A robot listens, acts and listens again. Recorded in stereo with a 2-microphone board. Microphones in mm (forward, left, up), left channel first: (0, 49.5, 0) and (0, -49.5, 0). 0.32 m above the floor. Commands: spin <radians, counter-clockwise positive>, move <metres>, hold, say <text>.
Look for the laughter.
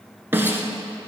hold
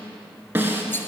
hold
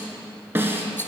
say I can't make out laughter, only a snare drum.